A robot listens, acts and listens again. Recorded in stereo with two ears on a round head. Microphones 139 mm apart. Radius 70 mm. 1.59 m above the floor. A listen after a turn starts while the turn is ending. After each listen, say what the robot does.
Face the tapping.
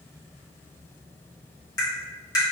Turn 25° left.
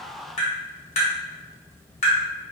Turn 135° left.
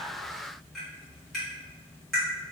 Found it: tapping, straight ahead, 1 to 2 m away.